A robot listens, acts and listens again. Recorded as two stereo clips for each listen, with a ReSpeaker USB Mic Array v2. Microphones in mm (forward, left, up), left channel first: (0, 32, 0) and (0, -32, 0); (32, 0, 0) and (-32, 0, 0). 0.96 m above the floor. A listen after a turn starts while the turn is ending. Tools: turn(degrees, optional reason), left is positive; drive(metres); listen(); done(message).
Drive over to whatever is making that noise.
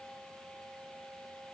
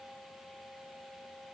listen()
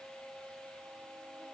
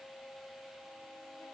listen()
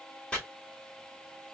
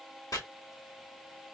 turn(degrees=15, reason="The chopping: 15° left.")
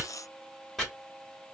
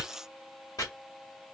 drive(metres=1.0)
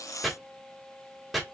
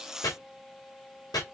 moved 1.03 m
drive(metres=1.0)
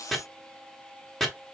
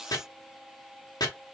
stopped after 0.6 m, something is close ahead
done("Arrived at the chopping, straight ahead.")